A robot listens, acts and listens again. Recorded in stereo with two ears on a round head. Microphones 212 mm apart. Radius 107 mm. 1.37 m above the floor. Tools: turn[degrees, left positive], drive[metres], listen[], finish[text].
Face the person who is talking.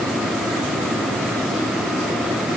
Action: listen[]
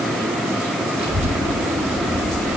Thought: The child speaking: about 25° right or 155° right.
Action: turn[-25]
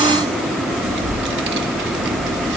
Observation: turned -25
Thought: So it is at 130° right.
Action: turn[-130]
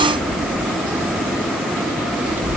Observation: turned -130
Thought: The child speaking is now 10° right.
Action: turn[-10]
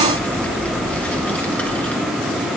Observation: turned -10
Action: finish[Facing the child speaking.]